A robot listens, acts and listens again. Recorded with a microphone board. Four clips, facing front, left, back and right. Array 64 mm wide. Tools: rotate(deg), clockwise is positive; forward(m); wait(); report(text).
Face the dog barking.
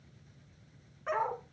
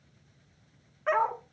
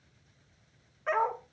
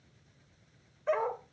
rotate(-95)
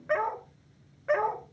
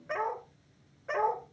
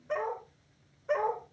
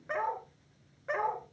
rotate(15)
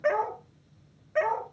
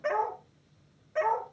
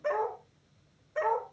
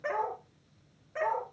report("Found it: a dog barking, straight ahead, 2 to 4 m away.")